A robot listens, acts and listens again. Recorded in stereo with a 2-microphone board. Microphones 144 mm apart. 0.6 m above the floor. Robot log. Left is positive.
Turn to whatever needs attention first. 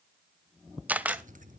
cmd idle
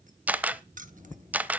cmd idle
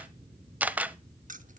end: I can't make out anything urgent to turn to.